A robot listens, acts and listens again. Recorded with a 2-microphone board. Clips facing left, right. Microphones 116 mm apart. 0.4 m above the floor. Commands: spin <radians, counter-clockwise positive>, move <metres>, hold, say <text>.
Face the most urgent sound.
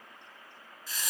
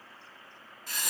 hold
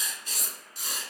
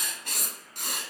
hold
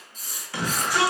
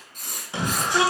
spin -0.44
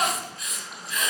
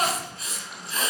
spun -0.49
say Found it: a shout, straight ahead, 1 to 2 m away.